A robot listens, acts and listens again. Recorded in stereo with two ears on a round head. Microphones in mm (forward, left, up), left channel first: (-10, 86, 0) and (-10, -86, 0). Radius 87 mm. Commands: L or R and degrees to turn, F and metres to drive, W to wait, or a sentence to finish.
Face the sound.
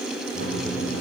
R50
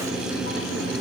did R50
R80
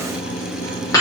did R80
L20
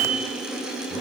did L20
Found it: a microwave, straight ahead, 2 to 4 m away.